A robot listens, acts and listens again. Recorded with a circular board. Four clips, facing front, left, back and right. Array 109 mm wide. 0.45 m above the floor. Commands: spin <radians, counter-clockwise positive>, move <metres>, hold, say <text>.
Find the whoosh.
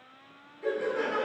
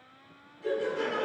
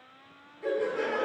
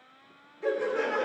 hold
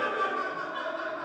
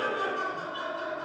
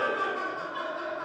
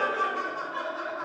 hold
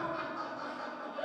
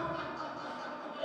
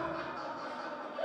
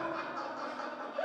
say I can't make out a whoosh, only laughter.